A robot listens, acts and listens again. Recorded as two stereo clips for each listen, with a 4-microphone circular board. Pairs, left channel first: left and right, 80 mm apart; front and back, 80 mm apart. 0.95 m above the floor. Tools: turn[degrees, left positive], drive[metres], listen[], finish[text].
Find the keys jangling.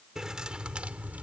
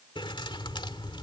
Thought: The keys jangling: 20° right.
Action: turn[-20]
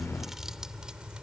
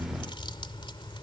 Thought: The keys jangling is now 10° right.
Action: turn[-10]
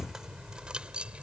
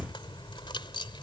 Thought: The keys jangling is now 15° right.
Action: turn[-15]
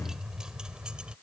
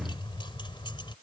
Thought: The keys jangling is now 10° right.
Action: turn[-10]
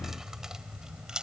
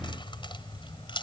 Thought: The keys jangling is now 10° right.
Action: turn[-10]
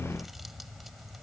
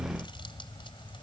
Action: finish[Found it: keys jangling, straight ahead.]